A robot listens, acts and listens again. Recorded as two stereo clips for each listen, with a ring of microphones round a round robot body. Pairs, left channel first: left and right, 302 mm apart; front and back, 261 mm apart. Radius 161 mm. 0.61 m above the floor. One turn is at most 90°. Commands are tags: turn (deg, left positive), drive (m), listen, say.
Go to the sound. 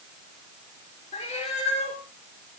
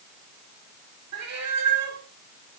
<turn deg="90"/>
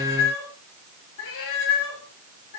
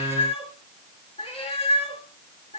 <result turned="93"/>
<turn deg="65"/>
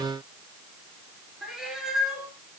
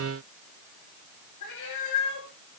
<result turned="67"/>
<drive m="1.0"/>
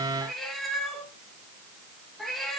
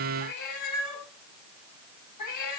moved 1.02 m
<drive m="1.0"/>
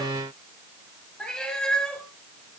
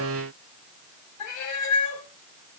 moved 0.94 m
<drive m="1.0"/>
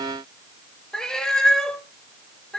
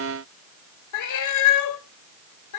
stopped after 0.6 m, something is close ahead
<say>Arrived at the cat meowing, straight ahead.</say>